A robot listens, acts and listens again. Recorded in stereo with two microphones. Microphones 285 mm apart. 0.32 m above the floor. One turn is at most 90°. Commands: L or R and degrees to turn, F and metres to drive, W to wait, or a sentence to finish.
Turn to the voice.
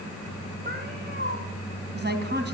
R35
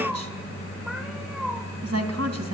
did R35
R90
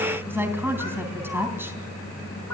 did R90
R10
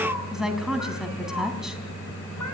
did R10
Facing the woman speaking, 2 to 4 m away.